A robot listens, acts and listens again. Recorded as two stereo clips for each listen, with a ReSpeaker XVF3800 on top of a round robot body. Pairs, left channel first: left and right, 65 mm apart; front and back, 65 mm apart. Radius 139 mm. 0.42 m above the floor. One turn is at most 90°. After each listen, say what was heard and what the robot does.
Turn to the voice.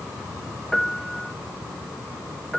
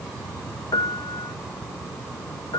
Keep listening.
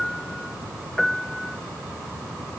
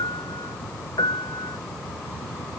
Keep listening.
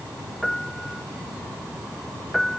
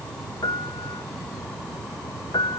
I can't make out anyone speaking to turn to.